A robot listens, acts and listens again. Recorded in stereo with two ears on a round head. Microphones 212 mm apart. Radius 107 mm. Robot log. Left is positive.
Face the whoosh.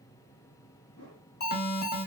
note: The whoosh: about 65° left or 115° left.
cmd yaw +65
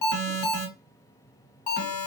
cmd idle
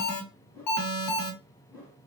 note: So it is at 10° left.
cmd yaw +10
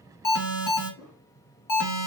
end: Found it: a whoosh, straight ahead, 1 to 2 m away.